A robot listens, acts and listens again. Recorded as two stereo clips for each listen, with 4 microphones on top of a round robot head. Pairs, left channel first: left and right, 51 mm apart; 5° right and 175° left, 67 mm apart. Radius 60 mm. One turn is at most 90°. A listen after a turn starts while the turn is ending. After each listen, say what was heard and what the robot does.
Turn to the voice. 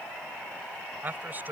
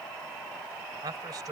The man speaking: 145° right. Turn 90° right.
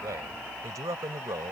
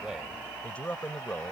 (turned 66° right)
The man speaking is now 80° right. Turn 80° right.
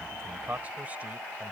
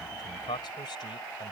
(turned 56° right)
The man speaking is now 20° right. Turn 20° right.
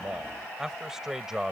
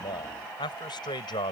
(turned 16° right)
Facing the man speaking.